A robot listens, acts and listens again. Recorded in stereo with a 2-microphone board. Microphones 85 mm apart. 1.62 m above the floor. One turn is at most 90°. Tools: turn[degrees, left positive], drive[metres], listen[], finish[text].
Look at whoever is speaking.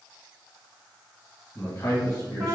Thought: The man speaking: about 35° left or 145° left.
Action: turn[35]
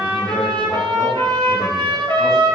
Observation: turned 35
Action: listen[]
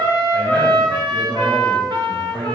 Action: finish[Found it: a man speaking, straight ahead.]